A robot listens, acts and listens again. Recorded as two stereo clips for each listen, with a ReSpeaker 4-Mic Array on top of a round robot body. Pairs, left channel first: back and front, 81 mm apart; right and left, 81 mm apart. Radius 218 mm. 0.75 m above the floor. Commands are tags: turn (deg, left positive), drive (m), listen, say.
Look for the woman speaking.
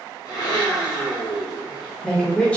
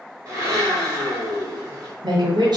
<turn deg="105"/>
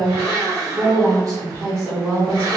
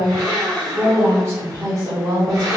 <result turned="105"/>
<turn deg="55"/>
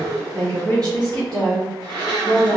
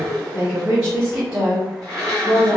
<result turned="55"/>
<turn deg="30"/>
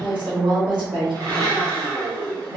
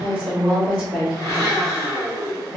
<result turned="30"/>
<say>Found it: a woman speaking, straight ahead, 1 to 2 m away.</say>